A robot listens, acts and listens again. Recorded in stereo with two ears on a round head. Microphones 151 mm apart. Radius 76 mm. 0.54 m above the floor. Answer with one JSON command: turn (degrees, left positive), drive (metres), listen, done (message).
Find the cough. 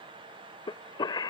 {"turn": 25}
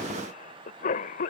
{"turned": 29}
{"turn": 125}
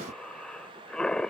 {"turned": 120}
{"done": "Found it: a cough, straight ahead."}